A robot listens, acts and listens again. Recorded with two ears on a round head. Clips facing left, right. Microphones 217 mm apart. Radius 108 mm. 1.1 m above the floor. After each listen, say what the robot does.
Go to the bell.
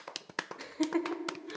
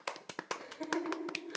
Keep listening.
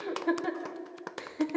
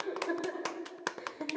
Keep listening.
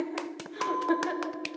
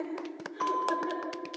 Turn 60° right.
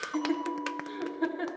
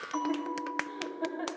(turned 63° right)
Turn 55° right.
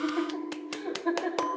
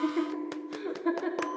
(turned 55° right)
Drive 1.0 m forward.
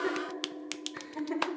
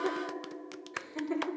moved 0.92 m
Drive 1.0 m forward.
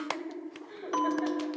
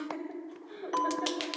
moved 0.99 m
Turn 10° left.
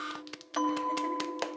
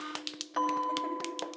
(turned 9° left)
Drive 1.0 m forward.
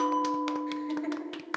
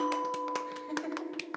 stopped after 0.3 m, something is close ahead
I am next to the bell.